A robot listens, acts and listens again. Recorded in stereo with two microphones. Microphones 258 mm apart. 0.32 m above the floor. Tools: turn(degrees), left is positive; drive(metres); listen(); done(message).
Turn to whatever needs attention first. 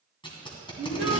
turn(degrees=-20)
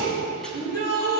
turn(degrees=-140)
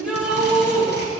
done("Facing the shout.")